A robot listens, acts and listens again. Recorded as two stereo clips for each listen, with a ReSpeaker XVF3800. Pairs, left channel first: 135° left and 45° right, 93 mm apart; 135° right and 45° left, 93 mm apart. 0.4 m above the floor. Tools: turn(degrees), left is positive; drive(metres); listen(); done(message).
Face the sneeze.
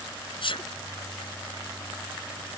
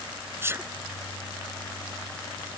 turn(degrees=110)
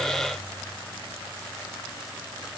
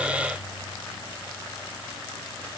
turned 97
turn(degrees=10)
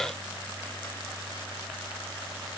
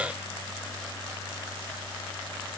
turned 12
done("Facing where the sneeze came from. I can't hear it now.")